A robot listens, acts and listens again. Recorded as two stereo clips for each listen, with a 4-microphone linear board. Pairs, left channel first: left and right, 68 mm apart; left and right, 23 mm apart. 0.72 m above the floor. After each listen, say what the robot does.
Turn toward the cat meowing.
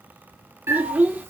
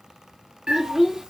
Turn 40° right.
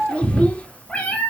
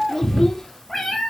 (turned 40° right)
Turn 20° left.
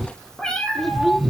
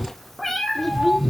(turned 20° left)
Turn 15° left.
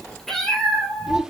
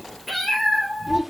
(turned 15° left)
Turn 10° left.
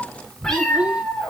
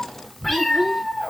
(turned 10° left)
Turn 10° left.
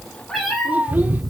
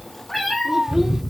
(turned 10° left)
Facing the cat meowing.